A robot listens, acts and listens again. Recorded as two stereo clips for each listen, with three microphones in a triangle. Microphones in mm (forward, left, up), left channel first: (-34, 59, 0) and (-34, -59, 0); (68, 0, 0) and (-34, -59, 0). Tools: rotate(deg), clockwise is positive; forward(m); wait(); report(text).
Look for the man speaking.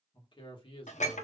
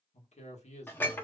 rotate(-50)
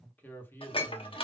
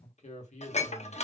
rotate(-25)
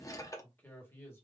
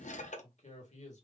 rotate(-20)
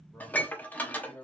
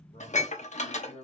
rotate(-20)
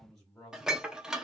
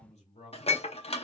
report("Facing the man speaking.")